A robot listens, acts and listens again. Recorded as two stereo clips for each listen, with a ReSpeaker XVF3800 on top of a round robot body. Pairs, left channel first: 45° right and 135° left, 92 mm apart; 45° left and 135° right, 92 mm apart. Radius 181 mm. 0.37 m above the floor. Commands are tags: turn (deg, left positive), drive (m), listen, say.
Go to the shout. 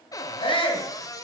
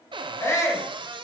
<turn deg="-15"/>
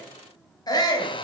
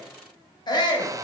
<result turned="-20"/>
<drive m="1.0"/>
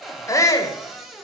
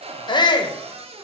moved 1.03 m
<turn deg="10"/>
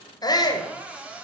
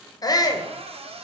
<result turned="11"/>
<drive m="1.0"/>
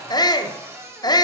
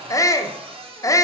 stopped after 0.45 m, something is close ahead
<say>Arrived at the shout, straight ahead.</say>